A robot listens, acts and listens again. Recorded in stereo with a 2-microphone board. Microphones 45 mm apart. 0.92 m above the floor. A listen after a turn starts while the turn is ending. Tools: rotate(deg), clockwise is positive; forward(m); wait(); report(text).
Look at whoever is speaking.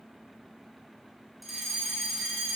wait()
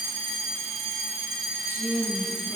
rotate(45)
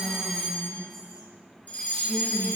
report("Facing the woman speaking, over 4 m away.")